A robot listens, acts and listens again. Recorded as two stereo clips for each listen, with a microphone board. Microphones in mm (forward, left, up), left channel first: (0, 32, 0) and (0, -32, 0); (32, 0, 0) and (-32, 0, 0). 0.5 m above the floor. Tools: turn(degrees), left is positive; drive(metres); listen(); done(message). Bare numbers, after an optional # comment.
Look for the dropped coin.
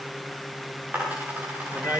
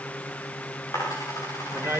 # The dropped coin: 30° right.
turn(-30)
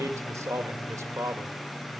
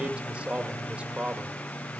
done("Facing where the dropped coin came from. I can't hear it now.")